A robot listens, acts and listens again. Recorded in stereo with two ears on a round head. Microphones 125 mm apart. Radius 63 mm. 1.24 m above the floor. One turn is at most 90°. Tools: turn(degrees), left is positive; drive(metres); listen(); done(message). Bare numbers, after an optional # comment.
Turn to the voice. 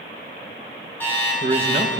# The man speaking: about 50° right or 130° right.
turn(-50)
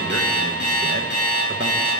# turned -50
listen()
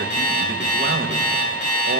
listen()
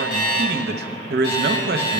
# So it is at 80° right.
turn(-80)
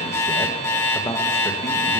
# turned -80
# The man speaking is now 15° left.
turn(15)
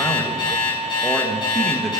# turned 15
listen()
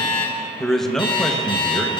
done("Facing the man speaking, 1 to 2 m away.")